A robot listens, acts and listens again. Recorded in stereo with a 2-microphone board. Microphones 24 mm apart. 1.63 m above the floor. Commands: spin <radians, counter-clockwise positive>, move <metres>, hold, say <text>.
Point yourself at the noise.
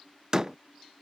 spin -0.44
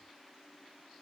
hold
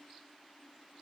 say I heard a door slam, but can't make it out now. It was about straight ahead or 130° right.